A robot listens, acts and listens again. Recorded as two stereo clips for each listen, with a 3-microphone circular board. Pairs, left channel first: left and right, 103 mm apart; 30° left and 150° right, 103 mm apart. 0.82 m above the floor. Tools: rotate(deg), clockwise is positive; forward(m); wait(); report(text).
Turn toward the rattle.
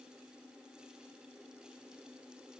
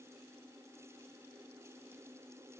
wait()
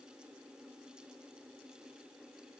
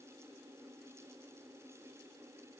wait()
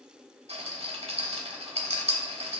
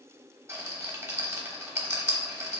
rotate(85)
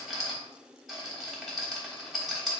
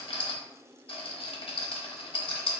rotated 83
report("Facing the rattle, 1 to 2 m away.")